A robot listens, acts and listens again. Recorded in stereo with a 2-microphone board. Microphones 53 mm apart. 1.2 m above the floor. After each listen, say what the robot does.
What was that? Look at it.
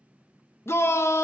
Turn 55° left.
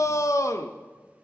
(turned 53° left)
Turn 70° left.
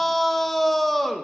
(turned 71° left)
Facing the shout.